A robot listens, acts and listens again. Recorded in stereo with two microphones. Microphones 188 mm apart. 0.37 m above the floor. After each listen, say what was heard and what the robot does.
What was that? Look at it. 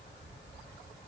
Keep listening.
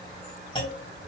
The clunk: about 25° left or 155° left. Turn 25° left.
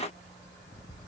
Keep listening.
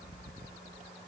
I heard a clunk, but can't make it out now. It was about straight ahead or 130° left.